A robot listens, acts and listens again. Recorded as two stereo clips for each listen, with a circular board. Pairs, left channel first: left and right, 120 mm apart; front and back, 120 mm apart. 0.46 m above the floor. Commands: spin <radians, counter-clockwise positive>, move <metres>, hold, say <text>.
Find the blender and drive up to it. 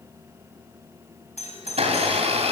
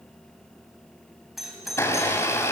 spin -1.13
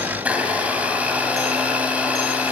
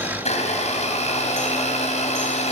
spin -0.26
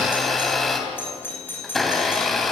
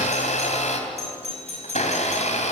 move 1.0
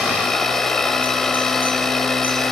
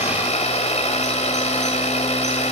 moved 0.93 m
move 1.0
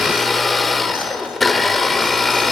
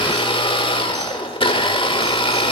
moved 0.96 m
move 1.0
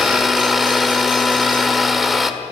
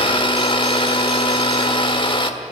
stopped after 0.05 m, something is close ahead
say I am next to the blender.